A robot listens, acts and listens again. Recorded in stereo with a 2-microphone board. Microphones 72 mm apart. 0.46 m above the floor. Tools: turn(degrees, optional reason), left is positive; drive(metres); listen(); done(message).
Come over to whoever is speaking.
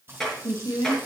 turn(degrees=55, reason="The woman speaking: about 55° left or 125° left.")
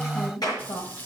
turn(degrees=60, reason="So it is at 60° left.")
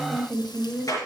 drive(metres=1.0)
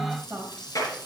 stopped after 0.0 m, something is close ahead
done("Something is in my way. I am facing the woman speaking but have not reached it.")